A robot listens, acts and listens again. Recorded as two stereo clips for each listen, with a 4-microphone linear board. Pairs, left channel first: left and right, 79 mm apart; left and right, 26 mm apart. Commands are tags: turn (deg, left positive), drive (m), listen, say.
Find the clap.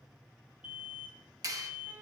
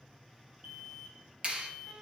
<turn deg="-45"/>
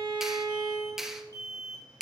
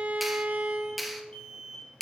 <say>Found it: a clap, straight ahead, 1 to 2 m away.</say>